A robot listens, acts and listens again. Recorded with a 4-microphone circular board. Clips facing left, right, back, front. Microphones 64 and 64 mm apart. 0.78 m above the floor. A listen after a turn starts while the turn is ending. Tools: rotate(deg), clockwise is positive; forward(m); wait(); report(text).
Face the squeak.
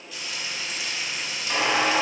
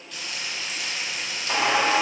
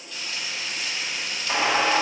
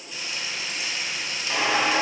rotate(125)
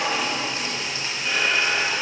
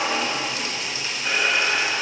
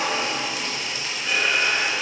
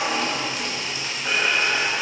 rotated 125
rotate(20)
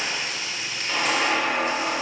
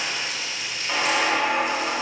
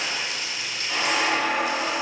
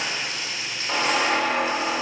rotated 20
report("Found it: a squeak, straight ahead.")